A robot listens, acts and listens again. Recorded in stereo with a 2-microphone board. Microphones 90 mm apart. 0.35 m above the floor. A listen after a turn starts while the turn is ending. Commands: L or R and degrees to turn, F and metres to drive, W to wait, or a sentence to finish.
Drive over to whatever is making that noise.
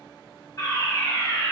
L40
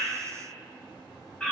L10
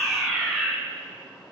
F1.0
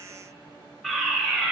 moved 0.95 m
F1.0
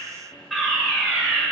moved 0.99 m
F1.0
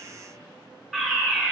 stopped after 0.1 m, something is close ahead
Arrived at the fire alarm, straight ahead.